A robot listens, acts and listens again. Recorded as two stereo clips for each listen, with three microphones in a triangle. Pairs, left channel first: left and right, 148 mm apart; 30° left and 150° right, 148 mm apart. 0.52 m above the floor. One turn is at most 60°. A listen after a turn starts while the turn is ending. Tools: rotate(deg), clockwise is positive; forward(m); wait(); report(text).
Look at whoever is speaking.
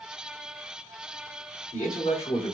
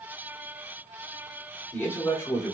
rotate(-60)
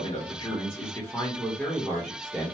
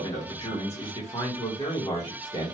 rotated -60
report("Found it: a man speaking, straight ahead, 1 to 2 m away.")